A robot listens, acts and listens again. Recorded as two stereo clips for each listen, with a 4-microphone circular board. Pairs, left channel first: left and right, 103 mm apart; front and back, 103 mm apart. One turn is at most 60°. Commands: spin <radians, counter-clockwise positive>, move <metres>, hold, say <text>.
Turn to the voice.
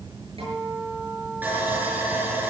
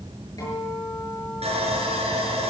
hold
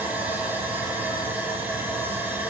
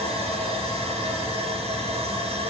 hold
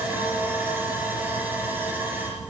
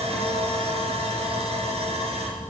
say I can't make out anyone speaking, only a guitar and sawing.